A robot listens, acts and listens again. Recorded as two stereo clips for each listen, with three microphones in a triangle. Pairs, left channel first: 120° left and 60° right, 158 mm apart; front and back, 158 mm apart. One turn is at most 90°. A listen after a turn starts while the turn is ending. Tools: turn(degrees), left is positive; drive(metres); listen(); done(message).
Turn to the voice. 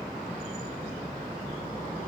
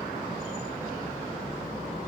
listen()
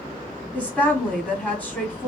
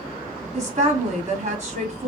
turn(degrees=-90)
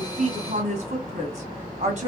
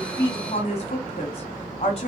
turn(degrees=-40)
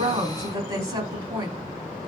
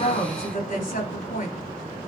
done("Found it: a woman speaking, straight ahead, 1 to 2 m away.")